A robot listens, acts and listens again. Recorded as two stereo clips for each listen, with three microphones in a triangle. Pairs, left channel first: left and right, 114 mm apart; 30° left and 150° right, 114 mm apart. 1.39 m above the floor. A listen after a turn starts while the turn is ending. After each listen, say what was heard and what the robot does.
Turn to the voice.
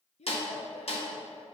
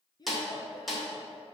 The child speaking: 80° left. Turn 80° left.
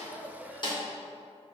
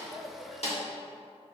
Keep listening.
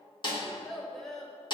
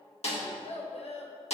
Facing the child speaking.